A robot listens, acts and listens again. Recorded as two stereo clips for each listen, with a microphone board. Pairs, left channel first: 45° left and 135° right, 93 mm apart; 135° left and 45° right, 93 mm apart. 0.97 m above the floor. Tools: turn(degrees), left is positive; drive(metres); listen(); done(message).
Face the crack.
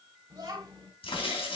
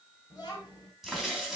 turn(degrees=40)
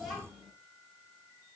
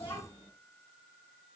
done("I heard a crack from this way, but can't make it out now.")